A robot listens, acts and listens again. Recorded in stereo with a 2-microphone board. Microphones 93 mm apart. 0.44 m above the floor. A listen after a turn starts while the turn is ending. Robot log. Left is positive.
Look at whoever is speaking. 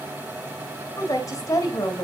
note: The woman speaking: about 40° left or 140° left.
cmd yaw +40
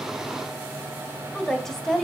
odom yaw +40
end: Found it: a woman speaking, straight ahead.